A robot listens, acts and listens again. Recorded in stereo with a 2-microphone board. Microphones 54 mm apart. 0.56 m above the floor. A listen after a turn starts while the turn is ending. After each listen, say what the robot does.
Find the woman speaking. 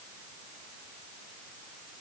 Keep listening.
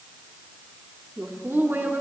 Turn 45° right.
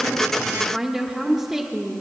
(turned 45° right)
Turn 15° right.
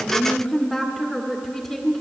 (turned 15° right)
Facing the woman speaking.